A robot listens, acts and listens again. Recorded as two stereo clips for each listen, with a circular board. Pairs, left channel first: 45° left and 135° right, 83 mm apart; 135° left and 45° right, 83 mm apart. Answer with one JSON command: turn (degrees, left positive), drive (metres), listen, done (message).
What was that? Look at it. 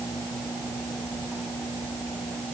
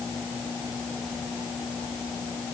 {"listen": true}
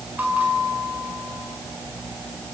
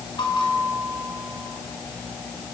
{"turn": 155}
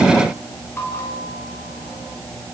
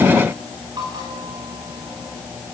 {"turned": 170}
{"turn": -15}
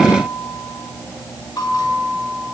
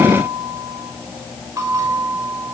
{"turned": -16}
{"done": "Found it: a bell, straight ahead, over 4 m away."}